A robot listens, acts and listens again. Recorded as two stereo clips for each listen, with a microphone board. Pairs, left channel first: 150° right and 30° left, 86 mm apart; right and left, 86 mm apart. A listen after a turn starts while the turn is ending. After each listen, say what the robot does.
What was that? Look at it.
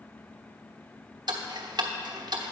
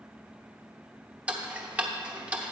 Turn 20° left.
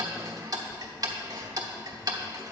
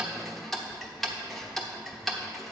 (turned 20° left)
Found it: ticking, straight ahead, 1 to 2 m away.